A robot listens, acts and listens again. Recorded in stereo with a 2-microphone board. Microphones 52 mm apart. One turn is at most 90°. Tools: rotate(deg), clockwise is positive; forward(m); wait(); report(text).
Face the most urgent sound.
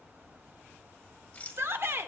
rotate(50)
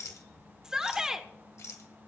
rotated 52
rotate(15)
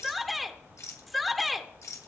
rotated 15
report("Found it: a shout, straight ahead, 1 to 2 m away.")